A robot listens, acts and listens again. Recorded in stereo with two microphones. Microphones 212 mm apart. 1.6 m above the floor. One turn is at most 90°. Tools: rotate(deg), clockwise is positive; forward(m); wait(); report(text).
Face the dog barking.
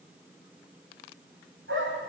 rotate(65)
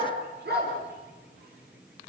rotate(50)
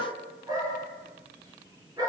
rotate(15)
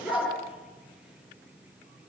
report("Found it: a dog barking, straight ahead, over 4 m away.")